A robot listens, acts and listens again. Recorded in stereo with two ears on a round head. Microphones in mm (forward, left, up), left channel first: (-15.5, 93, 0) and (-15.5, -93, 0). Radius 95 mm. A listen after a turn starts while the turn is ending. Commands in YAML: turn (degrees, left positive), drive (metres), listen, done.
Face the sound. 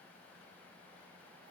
listen: true
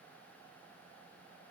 listen: true
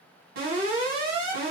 turn: -50
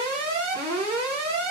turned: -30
turn: -95
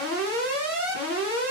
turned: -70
turn: -25
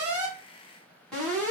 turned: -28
done: "Facing the alarm."